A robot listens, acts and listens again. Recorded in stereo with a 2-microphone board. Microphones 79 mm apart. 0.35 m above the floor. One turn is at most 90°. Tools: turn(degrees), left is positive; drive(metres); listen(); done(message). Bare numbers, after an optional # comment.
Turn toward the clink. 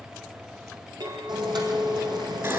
# The clink: about 65° right or 115° right.
turn(-65)
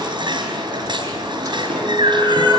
listen()
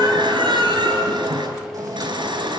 listen()
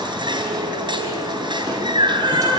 done("I heard a clink, but can't make it out now. It was about straight ahead or 50° right.")